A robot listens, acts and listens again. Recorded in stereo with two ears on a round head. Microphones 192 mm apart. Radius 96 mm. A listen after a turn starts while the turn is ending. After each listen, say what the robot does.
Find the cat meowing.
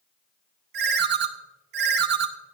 Keep listening.
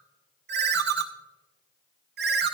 Keep listening.
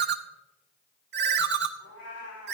Turn 90° left.
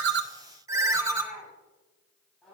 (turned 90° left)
Facing the cat meowing, over 4 m away.